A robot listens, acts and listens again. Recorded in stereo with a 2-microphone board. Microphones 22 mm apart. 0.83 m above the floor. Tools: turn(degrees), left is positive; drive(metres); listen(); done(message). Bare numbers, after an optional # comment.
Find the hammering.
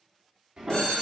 # The hammering: about 40° right or 140° right.
turn(-40)
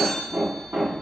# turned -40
# So it is at 100° right.
turn(-100)
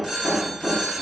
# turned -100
done("Found it: hammering, straight ahead.")